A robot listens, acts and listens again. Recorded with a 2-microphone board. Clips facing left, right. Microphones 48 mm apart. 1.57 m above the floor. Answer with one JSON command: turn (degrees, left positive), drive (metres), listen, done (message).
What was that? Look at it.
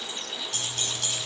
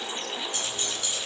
{"turn": 90}
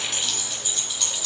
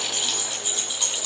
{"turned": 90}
{"turn": -10}
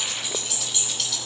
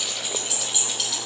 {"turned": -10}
{"done": "Facing the keys jangling, over 4 m away."}